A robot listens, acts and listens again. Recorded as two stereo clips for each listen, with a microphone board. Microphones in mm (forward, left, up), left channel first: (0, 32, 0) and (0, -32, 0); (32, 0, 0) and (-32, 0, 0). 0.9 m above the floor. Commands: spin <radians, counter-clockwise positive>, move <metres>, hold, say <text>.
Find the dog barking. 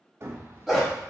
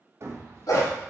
say Facing the dog barking, 1 to 2 m away.